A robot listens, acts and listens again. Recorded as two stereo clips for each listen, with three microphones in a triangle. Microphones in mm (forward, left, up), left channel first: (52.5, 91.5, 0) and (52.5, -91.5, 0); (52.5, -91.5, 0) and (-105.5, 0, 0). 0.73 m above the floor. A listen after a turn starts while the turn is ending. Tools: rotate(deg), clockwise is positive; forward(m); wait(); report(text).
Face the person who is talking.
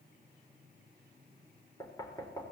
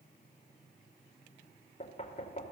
wait()
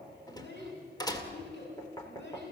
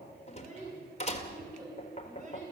rotate(-105)
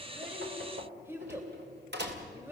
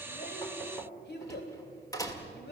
rotate(15)
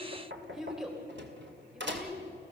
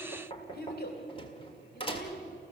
report("Facing the child speaking, 2 to 4 m away.")